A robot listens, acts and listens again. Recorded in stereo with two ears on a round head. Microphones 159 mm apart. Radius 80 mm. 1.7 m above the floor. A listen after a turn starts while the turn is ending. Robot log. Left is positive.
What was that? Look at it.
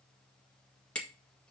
cmd yaw +30
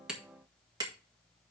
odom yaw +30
note: So it is at 25° right.
cmd yaw -25
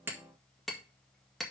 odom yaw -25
end: Found it: hammering, straight ahead, 1 to 2 m away.